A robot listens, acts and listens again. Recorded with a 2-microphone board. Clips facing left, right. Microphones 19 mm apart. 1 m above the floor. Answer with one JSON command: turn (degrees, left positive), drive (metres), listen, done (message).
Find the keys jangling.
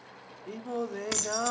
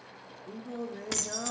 {"turn": 30}
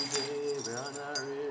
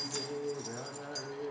{"listen": true}
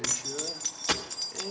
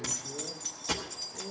{"turn": 140}
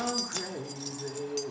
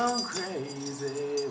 {"listen": true}
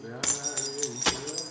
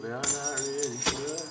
{"turn": 20}
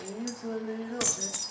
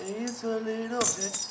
{"done": "Found it: keys jangling, straight ahead, 1 to 2 m away."}